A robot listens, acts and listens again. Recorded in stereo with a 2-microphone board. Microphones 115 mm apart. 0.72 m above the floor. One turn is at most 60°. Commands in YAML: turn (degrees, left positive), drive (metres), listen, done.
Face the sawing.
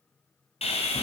turn: 60
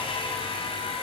turn: 50
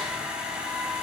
turn: -10
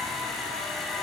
done: "Found it: sawing, straight ahead."